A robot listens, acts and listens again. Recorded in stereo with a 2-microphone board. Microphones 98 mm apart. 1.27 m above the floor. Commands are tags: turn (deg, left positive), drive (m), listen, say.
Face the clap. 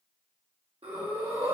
<listen/>
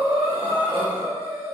<listen/>
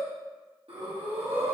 <say>I can't make out a clap, only breathing.</say>